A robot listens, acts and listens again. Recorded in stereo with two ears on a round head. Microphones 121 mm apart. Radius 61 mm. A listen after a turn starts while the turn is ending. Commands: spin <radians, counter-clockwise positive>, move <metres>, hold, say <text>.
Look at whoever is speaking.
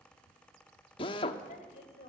spin 0.96
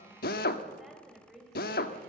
say Found it: a woman speaking, straight ahead.